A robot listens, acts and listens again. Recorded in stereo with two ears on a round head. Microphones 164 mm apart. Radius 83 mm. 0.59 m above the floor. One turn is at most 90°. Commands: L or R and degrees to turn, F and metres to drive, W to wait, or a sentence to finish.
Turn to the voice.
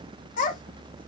L45
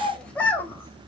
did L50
L10
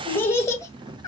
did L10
L20
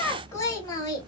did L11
L20
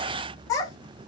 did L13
L20
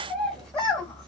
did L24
Facing the child speaking.